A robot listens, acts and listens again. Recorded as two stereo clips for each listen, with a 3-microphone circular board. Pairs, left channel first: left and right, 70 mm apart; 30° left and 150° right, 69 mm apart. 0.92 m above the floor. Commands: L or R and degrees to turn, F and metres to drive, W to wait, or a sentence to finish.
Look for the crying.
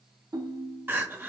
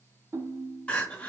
R40
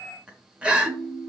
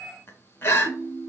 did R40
R20
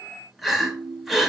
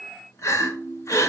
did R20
Facing the crying, under 1 m away.